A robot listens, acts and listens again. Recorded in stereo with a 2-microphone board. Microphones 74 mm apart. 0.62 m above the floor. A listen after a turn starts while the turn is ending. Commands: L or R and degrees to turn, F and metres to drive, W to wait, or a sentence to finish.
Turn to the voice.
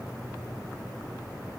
W
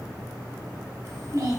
R45
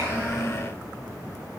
Found it: a child speaking, straight ahead, 2 to 4 m away.